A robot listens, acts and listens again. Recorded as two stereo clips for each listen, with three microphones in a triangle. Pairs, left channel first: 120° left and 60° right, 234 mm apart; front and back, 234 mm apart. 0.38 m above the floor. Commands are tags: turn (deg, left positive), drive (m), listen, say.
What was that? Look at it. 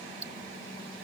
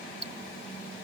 <turn deg="-50"/>
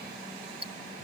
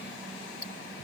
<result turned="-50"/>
<say>Found it: ticking, straight ahead.</say>